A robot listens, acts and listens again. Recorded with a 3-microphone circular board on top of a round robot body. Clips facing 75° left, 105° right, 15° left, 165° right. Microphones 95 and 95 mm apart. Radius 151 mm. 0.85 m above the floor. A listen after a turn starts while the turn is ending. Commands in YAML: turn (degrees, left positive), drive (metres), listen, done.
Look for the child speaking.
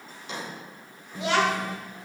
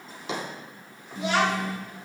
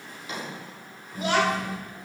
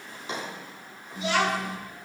turn: 60
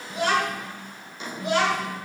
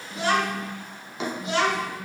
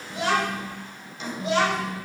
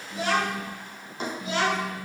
turn: 35
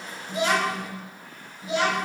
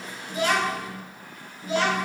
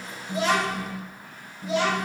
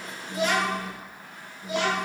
done: "Found it: a child speaking, straight ahead, 2 to 4 m away."